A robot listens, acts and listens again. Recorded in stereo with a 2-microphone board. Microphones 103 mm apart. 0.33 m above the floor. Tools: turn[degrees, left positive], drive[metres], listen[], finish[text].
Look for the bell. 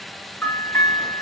Thought: The bell: about 20° left or 160° left.
Action: turn[20]
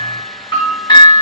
Thought: So it is at 135° left.
Action: turn[135]
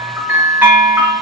Thought: The bell is now 15° right.
Action: turn[-15]
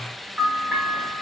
Action: finish[Found it: a bell, straight ahead.]